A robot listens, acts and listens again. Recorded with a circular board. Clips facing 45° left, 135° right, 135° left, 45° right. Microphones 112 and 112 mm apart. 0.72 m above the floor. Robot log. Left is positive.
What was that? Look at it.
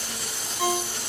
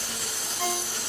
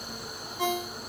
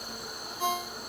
note: The ringtone: 125° left.
cmd yaw +125
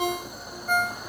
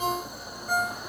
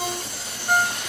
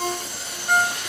note: The ringtone is now 50° left.
cmd yaw +50
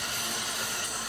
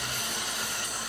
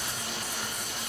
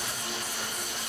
cmd idle
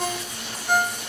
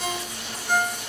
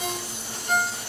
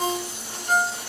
end: Facing the ringtone, 1 to 2 m away.